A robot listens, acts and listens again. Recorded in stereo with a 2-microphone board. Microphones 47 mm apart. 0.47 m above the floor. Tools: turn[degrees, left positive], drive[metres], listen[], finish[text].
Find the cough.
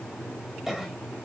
Action: turn[-30]
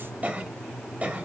Thought: So it is at 140° right.
Action: turn[-140]
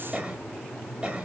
Thought: The cough is now 25° right.
Action: turn[-25]
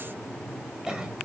Thought: The cough is now 15° right.
Action: turn[-15]
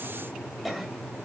Action: finish[Facing the cough.]